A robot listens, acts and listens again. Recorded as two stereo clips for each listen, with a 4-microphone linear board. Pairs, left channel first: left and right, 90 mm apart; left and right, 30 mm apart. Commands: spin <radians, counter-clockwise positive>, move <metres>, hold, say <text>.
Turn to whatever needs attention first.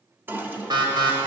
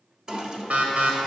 spin -0.96
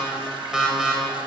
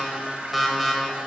say Facing the alarm, 1 to 2 m away.